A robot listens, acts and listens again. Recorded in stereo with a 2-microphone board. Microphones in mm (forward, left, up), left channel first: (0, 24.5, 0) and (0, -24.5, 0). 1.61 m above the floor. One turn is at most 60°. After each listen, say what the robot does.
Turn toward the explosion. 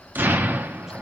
Turn 45° right.
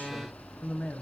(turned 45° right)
Keep listening.
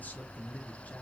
I heard an explosion, but can't make it out now. It was about straight ahead or 90° right.